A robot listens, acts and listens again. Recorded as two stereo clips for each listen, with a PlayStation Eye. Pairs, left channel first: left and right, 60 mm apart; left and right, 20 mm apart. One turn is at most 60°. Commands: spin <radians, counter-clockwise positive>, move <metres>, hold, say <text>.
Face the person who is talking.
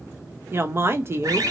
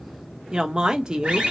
spin -0.70
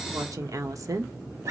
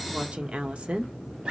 spin -1.05
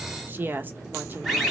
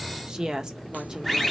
spin -0.61
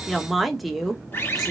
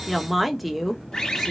say Facing the woman speaking, under 1 m away.